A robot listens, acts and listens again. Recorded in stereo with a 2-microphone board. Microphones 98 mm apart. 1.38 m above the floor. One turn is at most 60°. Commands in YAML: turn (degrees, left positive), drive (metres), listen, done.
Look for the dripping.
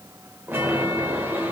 listen: true
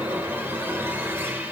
listen: true
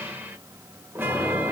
done: "I can't make out dripping to turn to."